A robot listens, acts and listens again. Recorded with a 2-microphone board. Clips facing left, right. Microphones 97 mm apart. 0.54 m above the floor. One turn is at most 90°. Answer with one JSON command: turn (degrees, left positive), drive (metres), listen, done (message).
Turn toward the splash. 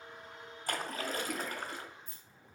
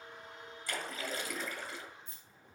{"turn": 55}
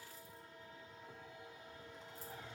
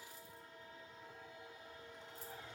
{"listen": true}
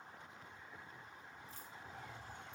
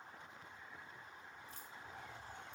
{"done": "I heard a splash, but can't make it out now. It was about straight ahead or 70° left."}